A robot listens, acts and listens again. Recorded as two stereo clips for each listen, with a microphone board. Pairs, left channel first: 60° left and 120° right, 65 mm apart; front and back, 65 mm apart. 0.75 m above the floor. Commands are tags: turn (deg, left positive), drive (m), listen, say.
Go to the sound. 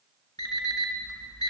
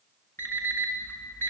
<turn deg="55"/>
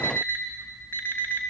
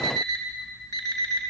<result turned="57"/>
<drive m="1.0"/>
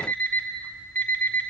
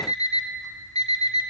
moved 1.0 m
<drive m="1.0"/>
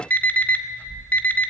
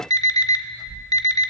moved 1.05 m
<drive m="1.0"/>
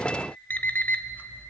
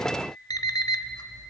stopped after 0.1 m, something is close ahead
<say>I am next to the alarm clock.</say>